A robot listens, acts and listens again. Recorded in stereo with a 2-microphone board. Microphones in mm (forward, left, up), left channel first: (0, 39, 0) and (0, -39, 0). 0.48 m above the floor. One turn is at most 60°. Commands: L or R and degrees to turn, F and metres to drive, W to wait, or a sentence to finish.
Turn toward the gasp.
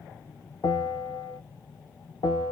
W
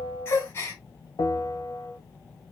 L35
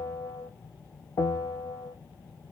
W
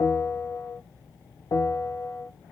I heard a gasp, but can't make it out now. It was about straight ahead or 110° left.